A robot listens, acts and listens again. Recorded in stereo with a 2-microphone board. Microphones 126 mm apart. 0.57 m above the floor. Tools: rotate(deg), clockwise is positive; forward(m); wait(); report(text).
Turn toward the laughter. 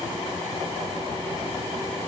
wait()
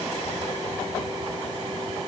wait()
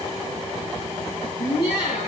rotate(-45)
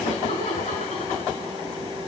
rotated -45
rotate(-85)
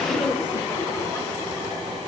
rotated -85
rotate(-15)
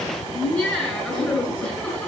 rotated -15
report("Facing the laughter, over 4 m away.")